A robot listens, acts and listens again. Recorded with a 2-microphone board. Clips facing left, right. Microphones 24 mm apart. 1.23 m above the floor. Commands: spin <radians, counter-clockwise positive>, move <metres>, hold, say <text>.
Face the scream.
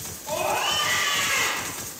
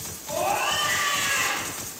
spin 0.70
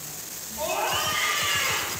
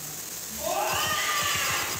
spin 1.75
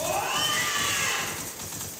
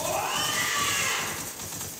say Facing the scream.